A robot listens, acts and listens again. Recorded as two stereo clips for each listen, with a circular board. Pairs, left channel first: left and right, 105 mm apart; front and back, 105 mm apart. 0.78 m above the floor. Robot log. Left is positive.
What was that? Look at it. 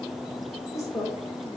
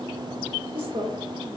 note: The woman speaking: 150° left.
cmd yaw +150
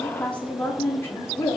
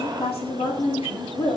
note: The woman speaking is now 35° left.
cmd yaw +35
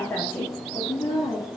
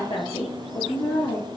note: The woman speaking is now 35° left.
cmd yaw +35
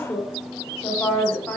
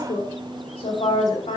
note: The woman speaking is now 10° left.
cmd yaw +10
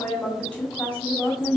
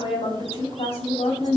end: Found it: a woman speaking, straight ahead, 1 to 2 m away.